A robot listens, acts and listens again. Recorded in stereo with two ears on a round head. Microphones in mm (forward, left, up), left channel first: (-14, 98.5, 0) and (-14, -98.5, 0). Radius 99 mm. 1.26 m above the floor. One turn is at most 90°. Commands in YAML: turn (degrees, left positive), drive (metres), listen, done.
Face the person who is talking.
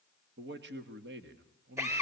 turn: -55
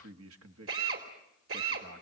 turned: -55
turn: -70
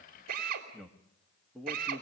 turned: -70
done: "Facing the man speaking, 1 to 2 m away."